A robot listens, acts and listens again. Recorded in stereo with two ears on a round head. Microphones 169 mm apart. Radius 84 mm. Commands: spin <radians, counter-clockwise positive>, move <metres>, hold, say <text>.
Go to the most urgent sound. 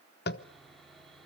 hold
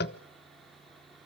hold
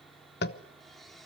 say I can't make out anything urgent, only sawing and tapping.